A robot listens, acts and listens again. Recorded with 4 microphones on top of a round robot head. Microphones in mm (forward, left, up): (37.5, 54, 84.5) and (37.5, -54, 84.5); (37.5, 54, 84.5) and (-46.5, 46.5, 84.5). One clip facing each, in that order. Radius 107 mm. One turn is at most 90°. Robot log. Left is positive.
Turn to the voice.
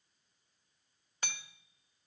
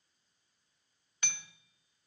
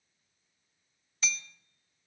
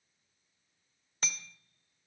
cmd idle
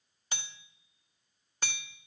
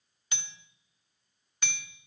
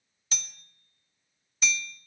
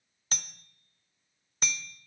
cmd idle
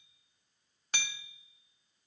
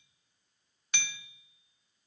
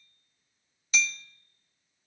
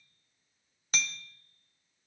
end: I can't make out anyone speaking to turn to.